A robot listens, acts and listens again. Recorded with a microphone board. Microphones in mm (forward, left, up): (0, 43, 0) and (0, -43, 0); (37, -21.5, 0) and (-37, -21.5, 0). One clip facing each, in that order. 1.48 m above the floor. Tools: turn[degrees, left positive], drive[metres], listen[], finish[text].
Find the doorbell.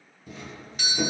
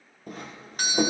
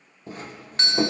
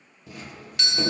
Thought: The doorbell: 50° right.
Action: turn[-50]
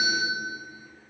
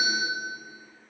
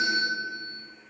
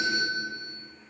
Thought: The doorbell is now 20° left.
Action: turn[20]
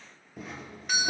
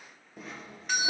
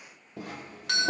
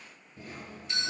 Action: finish[Found it: a doorbell, straight ahead.]